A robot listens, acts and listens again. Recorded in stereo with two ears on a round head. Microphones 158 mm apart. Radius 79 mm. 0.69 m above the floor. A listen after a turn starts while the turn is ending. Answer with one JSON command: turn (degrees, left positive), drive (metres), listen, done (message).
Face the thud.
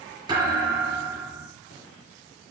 {"turn": -25}
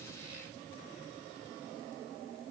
{"listen": true}
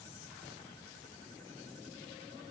{"done": "I heard a thud, but can't make it out now. It was about straight ahead or 130° right."}